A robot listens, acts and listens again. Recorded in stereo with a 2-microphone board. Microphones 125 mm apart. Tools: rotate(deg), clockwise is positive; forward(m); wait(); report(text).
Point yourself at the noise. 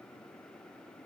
wait()
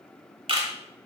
rotate(50)
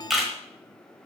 report("Facing the camera shutter.")